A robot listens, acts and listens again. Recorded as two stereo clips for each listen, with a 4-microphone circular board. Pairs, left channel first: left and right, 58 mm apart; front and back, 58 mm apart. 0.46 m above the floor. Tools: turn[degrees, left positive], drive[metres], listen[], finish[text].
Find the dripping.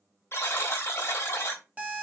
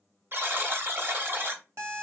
Action: listen[]
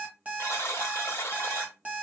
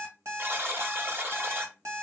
Action: listen[]
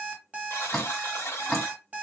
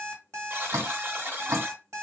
Thought: The dripping: 165° left.
Action: turn[165]
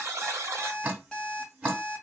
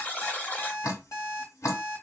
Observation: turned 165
Thought: The dripping is now 25° right.
Action: turn[-25]
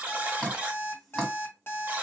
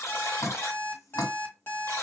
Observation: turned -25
Action: finish[Facing the dripping, 1 to 2 m away.]